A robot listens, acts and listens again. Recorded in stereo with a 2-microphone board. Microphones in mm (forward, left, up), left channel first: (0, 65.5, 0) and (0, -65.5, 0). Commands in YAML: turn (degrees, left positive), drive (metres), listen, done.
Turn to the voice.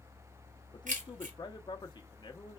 turn: 35
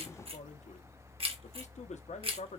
turn: 110
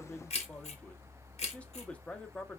turn: 10
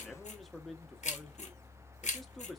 done: "Found it: a man speaking, straight ahead, under 1 m away."